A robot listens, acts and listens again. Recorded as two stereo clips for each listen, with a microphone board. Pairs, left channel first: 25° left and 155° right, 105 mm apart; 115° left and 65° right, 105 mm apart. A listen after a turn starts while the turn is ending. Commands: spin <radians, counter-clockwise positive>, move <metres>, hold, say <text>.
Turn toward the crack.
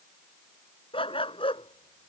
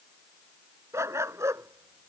hold
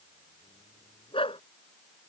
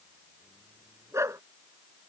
hold
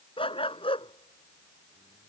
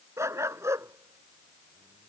say I can't make out a crack, only a dog barking.